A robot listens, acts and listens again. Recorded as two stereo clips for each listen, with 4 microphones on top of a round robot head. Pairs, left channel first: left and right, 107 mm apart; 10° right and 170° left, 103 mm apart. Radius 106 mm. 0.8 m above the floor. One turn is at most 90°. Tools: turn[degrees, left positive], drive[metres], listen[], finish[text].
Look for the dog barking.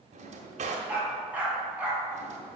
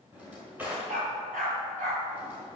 Thought: The dog barking: 165° right.
Action: turn[-90]
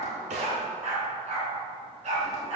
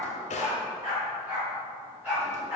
Thought: The dog barking is now 110° right.
Action: turn[-90]
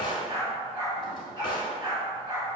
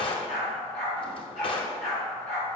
Thought: The dog barking is now 30° right.
Action: turn[-30]
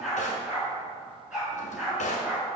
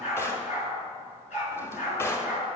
Action: finish[Facing the dog barking, over 4 m away.]